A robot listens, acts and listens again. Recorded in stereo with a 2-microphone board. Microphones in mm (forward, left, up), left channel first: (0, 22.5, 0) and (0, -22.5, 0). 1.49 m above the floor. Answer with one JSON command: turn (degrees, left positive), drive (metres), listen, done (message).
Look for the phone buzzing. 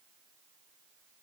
{"listen": true}
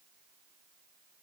{"listen": true}
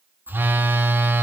{"turn": -50}
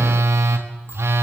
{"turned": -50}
{"turn": -80}
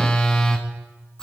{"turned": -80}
{"turn": 20}
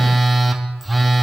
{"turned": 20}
{"done": "Found it: a phone buzzing, straight ahead."}